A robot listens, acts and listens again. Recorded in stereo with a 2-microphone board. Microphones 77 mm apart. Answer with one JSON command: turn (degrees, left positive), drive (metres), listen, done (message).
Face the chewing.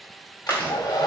{"turn": 25}
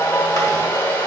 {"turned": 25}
{"listen": true}
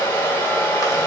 {"listen": true}
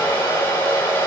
{"done": "I heard chewing, but can't make it out now. It was about straight ahead or 130° left."}